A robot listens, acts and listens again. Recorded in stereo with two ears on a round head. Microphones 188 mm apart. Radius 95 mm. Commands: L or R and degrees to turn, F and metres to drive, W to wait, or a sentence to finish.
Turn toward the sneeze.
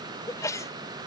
L15
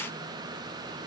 W
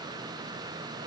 I heard a sneeze, but can't make it out now. It was about straight ahead or 150° left.